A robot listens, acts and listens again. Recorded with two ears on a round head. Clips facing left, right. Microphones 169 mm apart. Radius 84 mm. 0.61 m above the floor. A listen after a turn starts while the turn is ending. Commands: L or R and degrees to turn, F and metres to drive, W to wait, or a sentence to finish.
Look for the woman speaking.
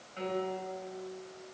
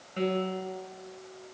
W
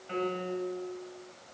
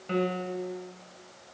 W
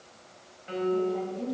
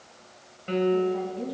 L30
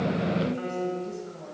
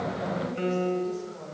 L150
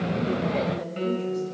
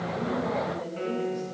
L45
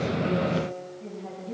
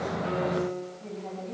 L10
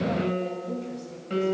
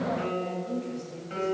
Facing the woman speaking, 2 to 4 m away.